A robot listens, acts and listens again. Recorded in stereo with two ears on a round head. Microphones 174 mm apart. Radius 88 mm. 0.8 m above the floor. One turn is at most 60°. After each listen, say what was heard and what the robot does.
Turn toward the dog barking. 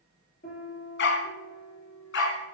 The dog barking: about 70° left or 110° left. Turn 60° left.
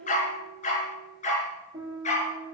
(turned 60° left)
So it is at 35° left. Turn 35° left.
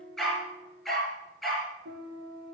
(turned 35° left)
Found it: a dog barking, straight ahead, over 4 m away.